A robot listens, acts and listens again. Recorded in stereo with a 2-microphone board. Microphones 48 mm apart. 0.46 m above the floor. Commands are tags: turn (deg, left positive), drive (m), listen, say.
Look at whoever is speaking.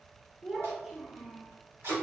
<turn deg="-30"/>
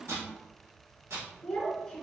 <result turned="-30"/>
<turn deg="15"/>
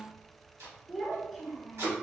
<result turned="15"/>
<say>Found it: a child speaking, straight ahead.</say>